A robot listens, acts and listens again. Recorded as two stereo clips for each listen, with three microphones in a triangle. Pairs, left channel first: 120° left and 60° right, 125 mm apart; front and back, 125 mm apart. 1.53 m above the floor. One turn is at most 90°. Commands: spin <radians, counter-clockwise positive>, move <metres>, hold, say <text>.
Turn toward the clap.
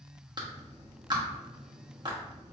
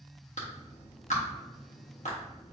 say Found it: a clap, straight ahead, 1 to 2 m away.